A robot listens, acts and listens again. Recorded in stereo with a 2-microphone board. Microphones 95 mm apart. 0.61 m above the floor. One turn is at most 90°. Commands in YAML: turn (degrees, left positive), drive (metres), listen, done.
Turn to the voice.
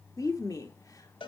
turn: 40
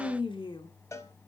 turn: 90
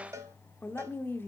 turn: 25
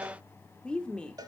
turn: 10
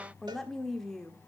done: "Found it: a woman speaking, straight ahead, 1 to 2 m away."